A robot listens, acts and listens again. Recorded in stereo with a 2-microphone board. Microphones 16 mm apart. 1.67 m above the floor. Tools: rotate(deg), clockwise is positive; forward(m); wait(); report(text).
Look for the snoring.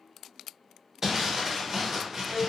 wait()
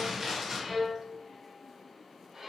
wait()
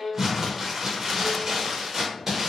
report("I can't make out snoring to turn to.")